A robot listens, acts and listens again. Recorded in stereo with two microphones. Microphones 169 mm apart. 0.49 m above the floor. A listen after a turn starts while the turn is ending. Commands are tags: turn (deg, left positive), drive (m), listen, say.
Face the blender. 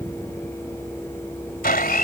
<turn deg="70"/>
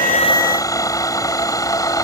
<turn deg="25"/>
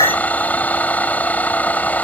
<turn deg="10"/>
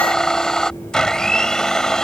<say>Facing the blender.</say>